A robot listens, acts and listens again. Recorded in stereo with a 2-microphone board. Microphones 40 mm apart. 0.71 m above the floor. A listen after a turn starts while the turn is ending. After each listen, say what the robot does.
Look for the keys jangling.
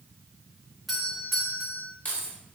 Turn 40° left.
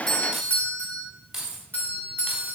Turn 10° right.
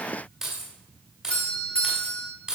Turn 15° right.
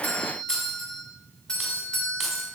Found it: keys jangling, straight ahead.